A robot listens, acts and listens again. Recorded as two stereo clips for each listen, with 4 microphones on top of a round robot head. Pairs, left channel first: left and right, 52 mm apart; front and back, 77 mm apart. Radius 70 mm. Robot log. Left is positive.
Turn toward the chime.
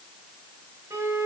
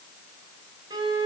cmd idle
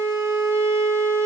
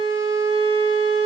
cmd idle
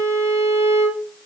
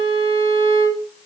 end: I can't make out a chime to turn to.